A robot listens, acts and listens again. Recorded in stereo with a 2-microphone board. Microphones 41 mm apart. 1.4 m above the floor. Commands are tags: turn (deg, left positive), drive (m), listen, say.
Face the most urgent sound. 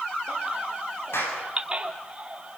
<turn deg="-25"/>
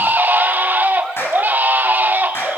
<turn deg="-130"/>
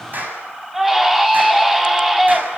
<turn deg="-10"/>
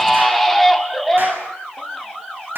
<say>Found it: a baby crying, straight ahead.</say>